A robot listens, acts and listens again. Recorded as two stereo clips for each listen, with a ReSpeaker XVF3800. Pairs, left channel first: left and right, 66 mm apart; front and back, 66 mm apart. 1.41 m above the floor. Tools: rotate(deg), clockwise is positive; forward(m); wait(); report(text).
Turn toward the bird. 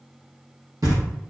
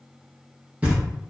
wait()
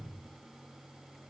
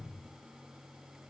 wait()
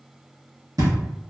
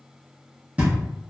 report("I can't make out a bird, only knocking.")